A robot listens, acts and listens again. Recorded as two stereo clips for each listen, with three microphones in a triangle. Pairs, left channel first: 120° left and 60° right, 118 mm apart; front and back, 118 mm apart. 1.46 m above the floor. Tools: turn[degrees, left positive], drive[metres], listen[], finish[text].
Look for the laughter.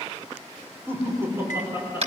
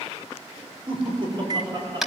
Thought: The laughter: 130° right.
Action: turn[-130]
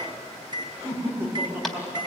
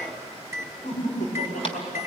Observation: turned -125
Thought: The laughter is now 10° left.
Action: turn[10]
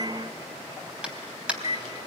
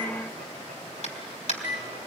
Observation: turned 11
Action: listen[]
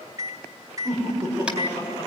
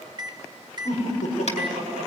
Action: finish[Found it: laughter, straight ahead.]